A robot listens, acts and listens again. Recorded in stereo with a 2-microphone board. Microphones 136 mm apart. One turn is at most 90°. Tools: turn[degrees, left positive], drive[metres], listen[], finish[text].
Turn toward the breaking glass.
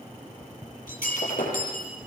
Action: turn[90]
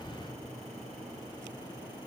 Action: finish[I heard breaking glass from this way, but can't make it out now.]